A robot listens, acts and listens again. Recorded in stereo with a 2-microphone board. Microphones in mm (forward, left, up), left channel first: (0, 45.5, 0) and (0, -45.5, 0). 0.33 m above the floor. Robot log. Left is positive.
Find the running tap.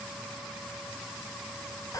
cmd idle
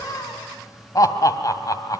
cmd idle
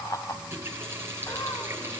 note: The running tap: about 25° right or 155° right.
cmd yaw -25
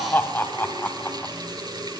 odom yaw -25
note: So it is at 130° right.
cmd yaw -130
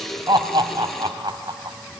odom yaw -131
end: Found it: a running tap, straight ahead, over 4 m away.